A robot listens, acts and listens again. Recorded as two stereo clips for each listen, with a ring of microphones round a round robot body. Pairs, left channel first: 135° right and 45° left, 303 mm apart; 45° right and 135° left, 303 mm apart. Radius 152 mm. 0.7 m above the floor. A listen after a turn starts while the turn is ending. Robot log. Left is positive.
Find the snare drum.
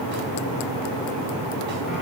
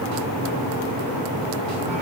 cmd idle
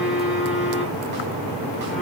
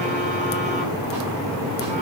cmd idle
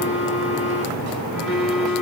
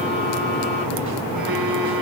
end: I can't make out a snare drum to turn to.